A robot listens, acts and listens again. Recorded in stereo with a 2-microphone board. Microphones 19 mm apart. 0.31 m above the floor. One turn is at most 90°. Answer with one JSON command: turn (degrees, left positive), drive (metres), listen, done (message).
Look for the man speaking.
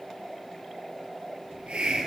{"listen": true}
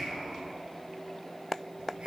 {"listen": true}
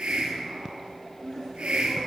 {"turn": 30}
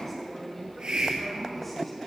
{"done": "Found it: a man speaking, straight ahead."}